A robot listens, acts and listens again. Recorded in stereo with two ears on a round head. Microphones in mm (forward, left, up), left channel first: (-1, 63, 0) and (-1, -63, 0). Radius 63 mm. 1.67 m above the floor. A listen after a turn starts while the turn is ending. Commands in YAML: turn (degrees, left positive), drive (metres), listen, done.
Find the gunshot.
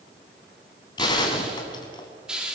turn: 30
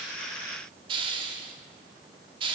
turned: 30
listen: true
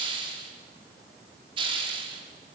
done: "I heard a gunshot, but can't make it out now. It was about straight ahead or 120° left."